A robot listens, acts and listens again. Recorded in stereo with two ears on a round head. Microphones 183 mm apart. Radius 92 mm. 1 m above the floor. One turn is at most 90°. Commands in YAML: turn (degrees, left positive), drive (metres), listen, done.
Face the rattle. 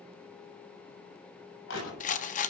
turn: 40
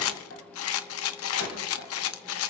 turn: 90
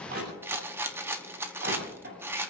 turn: -10
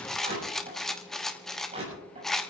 done: "Facing the rattle."